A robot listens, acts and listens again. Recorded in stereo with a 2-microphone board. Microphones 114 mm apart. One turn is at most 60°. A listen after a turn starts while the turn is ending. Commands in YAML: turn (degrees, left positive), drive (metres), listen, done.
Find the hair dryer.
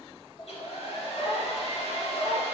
turn: 60
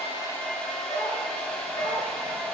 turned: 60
turn: 10
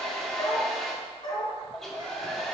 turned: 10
done: "Facing the hair dryer."